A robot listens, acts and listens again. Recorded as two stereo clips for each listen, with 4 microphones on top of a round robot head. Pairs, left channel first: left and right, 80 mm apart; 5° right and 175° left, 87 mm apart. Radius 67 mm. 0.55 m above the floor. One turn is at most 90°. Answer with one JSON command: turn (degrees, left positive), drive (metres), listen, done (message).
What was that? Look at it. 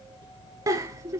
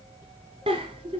{"turn": -90}
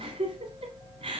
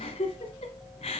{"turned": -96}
{"turn": -45}
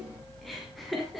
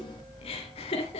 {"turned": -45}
{"done": "Facing the giggle."}